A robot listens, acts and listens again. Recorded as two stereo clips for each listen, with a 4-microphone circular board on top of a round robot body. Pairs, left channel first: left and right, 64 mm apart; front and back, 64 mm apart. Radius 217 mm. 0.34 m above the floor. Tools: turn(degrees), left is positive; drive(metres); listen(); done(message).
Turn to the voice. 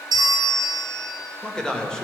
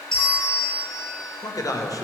turn(degrees=10)
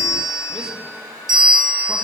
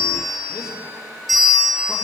listen()
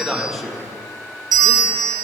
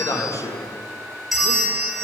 done("Found it: a man speaking, straight ahead.")